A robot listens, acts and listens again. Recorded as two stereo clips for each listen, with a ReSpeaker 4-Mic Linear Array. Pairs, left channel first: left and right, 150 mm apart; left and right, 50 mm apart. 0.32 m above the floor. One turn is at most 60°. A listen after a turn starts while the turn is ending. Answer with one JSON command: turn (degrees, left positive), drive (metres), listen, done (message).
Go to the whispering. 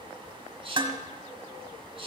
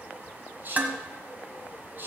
{"turn": -40}
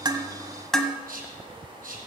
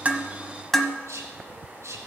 {"turn": -60}
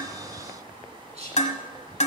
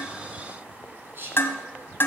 {"turn": -50}
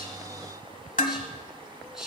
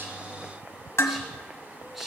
{"drive": 1.0}
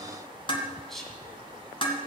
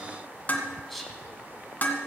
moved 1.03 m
{"drive": 1.0}
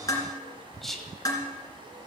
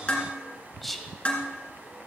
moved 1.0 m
{"drive": 1.0}
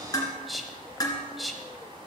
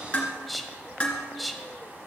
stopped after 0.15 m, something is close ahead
{"done": "Arrived at the whispering, straight ahead."}